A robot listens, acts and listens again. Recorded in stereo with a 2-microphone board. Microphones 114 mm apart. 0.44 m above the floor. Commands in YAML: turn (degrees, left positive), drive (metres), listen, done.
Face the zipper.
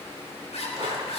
turn: 75
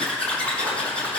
turn: 10
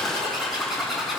done: "Facing the zipper."